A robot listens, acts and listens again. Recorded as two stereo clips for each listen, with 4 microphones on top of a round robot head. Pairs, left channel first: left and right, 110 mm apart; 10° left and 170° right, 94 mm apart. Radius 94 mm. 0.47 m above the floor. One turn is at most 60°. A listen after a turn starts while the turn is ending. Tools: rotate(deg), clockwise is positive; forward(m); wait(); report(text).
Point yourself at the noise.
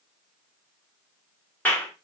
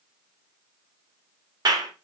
rotate(-60)
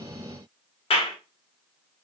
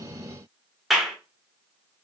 rotate(-60)
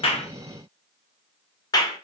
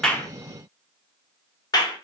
rotate(-45)
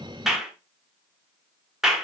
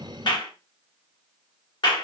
report("Facing the clap.")